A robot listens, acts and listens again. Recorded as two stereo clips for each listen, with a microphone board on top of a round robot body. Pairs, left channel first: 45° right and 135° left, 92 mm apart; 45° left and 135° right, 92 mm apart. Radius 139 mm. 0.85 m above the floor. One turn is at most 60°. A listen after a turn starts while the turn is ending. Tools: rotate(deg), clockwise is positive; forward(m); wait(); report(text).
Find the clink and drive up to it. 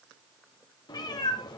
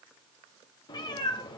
wait()
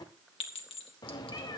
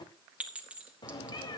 rotate(60)
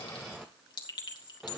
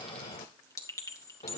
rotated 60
rotate(10)
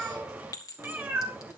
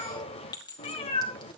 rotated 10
forward(1.0)
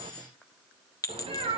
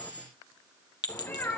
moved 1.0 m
forward(1.0)
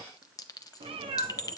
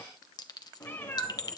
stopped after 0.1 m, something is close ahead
report("Arrived at the clink, straight ahead.")